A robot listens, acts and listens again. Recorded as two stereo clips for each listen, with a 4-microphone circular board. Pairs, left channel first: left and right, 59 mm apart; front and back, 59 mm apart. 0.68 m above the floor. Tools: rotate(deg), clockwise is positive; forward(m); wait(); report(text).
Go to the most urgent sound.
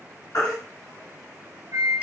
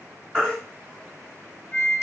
rotate(-75)
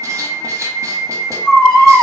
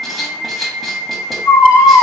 rotate(-15)
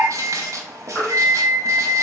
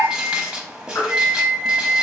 forward(1.0)
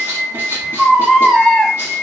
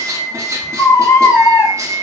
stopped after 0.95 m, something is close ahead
report("Arrived at the baby crying, straight ahead.")